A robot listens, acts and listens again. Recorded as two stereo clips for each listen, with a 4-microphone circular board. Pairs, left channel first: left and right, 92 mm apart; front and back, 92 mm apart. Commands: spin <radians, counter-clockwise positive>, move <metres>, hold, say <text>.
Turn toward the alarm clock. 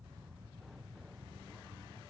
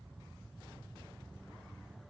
hold
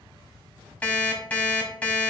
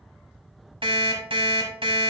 spin 2.88
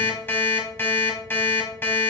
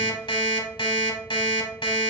spin 0.44
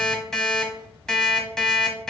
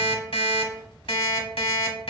spin 0.17
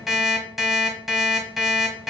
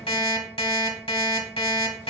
say Found it: an alarm clock, straight ahead, 1 to 2 m away.